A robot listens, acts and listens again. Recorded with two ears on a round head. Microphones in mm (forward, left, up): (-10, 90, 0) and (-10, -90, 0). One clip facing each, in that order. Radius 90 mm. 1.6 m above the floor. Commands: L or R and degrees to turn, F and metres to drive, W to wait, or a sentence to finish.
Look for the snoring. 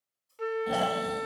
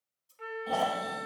L20
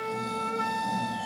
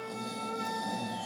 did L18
W
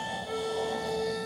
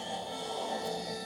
Found it: snoring, straight ahead.